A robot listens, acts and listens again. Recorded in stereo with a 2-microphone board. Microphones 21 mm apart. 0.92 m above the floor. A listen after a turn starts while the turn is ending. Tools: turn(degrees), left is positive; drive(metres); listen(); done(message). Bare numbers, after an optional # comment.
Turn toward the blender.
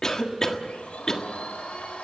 turn(90)
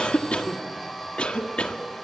done("Found it: a blender, straight ahead.")